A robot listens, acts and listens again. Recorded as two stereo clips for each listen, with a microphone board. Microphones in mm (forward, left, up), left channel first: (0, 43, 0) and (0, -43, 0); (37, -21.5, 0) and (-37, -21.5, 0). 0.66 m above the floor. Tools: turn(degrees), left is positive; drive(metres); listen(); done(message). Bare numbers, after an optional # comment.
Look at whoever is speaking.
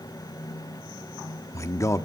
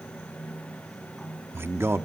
# The man speaking: 135° left.
turn(135)
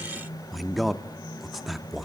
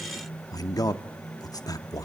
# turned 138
done("Facing the man speaking, under 1 m away.")